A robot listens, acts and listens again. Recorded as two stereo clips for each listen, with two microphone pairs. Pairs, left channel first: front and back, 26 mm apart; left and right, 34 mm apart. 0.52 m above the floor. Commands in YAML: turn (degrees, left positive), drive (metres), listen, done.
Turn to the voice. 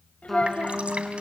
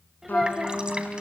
turn: -10
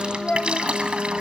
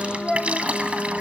done: "Facing the child speaking, 2 to 4 m away."